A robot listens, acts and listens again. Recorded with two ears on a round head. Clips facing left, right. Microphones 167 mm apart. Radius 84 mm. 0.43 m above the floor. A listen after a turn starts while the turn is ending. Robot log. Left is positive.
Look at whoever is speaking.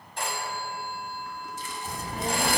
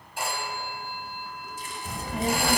note: The child speaking: about 65° right or 115° right.
cmd yaw -65
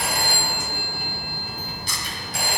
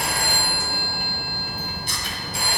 note: So it is at 55° right.
cmd yaw -55
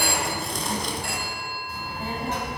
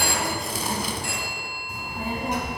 note: The child speaking is now 10° right.
cmd yaw -10
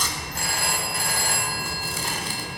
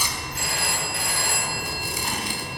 end: Found it: a child speaking, straight ahead.